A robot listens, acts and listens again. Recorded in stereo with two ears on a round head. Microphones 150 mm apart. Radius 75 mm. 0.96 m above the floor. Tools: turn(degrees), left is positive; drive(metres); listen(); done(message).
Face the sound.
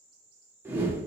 turn(degrees=-30)
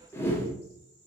turn(degrees=15)
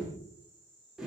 done("Facing the whoosh, under 1 m away.")